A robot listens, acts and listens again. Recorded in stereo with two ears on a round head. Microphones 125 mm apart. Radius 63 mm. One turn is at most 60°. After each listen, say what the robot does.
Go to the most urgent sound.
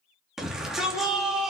Turn 30° right.
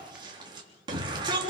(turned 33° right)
Turn 60° right.
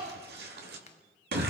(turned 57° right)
Turn 60° right.
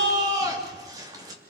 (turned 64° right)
Turn 25° right.
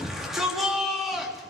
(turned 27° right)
Drive 1.0 m forward.
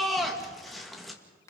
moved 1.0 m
Drive 1.0 m forward.
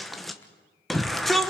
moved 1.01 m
Drive 1.0 m forward.
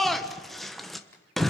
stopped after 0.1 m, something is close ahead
Arrived at the shout, straight ahead.